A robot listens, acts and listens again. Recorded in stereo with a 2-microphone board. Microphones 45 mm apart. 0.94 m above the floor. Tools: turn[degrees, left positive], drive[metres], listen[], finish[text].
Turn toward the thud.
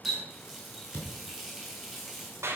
Action: turn[90]
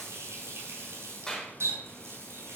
Action: finish[I heard a thud from this way, but can't make it out now.]